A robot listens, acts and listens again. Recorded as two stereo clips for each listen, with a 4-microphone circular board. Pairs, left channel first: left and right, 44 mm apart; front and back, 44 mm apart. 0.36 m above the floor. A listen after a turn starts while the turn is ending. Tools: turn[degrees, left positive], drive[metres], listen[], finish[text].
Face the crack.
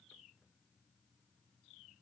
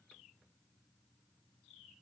Action: listen[]
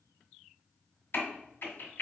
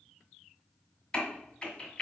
Thought: The crack: 70° left.
Action: turn[70]
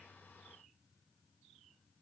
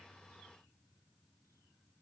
Action: finish[Facing where the crack came from. I can't hear it now.]